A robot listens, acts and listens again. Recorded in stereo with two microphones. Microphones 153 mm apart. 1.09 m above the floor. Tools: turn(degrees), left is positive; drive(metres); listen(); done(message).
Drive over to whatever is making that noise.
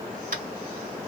turn(degrees=-65)
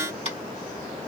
turn(degrees=-40)
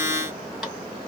listen()
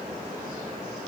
listen()
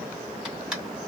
drive(metres=1.0)
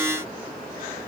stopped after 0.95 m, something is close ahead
listen()
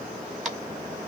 done("Arrived at the tapping, straight ahead.")